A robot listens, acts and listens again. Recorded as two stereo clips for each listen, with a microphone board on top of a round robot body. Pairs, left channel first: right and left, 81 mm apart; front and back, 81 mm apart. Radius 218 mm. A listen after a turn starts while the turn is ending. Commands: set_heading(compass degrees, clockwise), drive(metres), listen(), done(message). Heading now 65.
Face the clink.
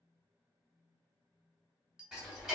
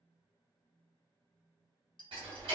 set_heading(55)
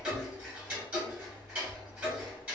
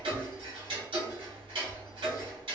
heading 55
listen()
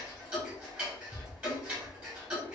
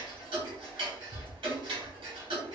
listen()
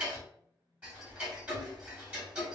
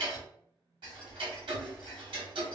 done("I heard a clink from this way, but can't make it out now.")